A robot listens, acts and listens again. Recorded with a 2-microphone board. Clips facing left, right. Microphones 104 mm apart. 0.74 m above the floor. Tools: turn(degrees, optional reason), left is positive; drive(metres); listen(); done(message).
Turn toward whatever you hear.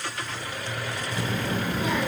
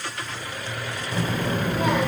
turn(degrees=-65, reason="The child speaking: about 65° right or 115° right.")
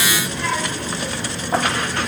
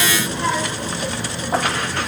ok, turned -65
done("Facing the child speaking.")